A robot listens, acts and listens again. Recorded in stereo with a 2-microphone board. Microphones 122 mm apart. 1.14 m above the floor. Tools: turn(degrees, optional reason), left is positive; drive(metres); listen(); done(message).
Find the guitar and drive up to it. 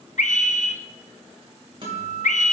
turn(degrees=-45, reason="The guitar: about 45° right or 135° right.")
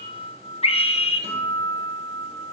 turn(degrees=-85, reason="So it is at 85° right.")
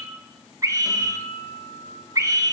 drive(metres=1.0)
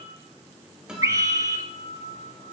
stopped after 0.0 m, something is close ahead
done("Something is in my way. I am facing the guitar but have not reached it.")